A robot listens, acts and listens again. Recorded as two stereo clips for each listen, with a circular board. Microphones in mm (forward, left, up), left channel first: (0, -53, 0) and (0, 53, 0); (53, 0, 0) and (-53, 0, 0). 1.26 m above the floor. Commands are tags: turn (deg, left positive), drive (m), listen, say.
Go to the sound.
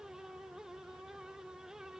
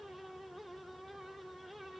<listen/>
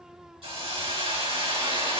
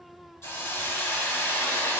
<turn deg="65"/>
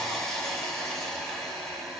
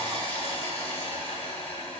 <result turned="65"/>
<drive m="1.0"/>
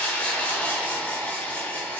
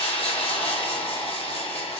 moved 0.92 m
<turn deg="-15"/>
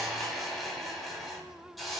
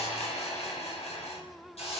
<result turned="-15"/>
<drive m="1.0"/>
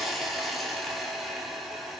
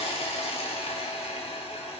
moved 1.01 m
<drive m="1.0"/>
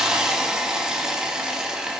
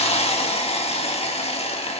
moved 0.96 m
<drive m="1.0"/>
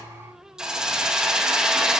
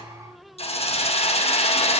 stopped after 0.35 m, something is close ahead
<say>I am next to the hiss.</say>